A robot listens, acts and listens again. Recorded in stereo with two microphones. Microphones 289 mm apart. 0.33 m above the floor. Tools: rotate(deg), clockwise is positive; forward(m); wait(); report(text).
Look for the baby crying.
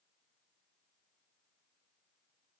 wait()
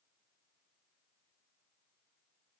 wait()
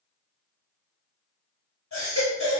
rotate(-70)
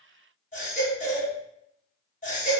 rotate(-30)
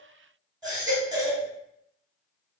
rotate(15)
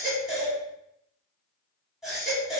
report("Facing the baby crying, 1 to 2 m away.")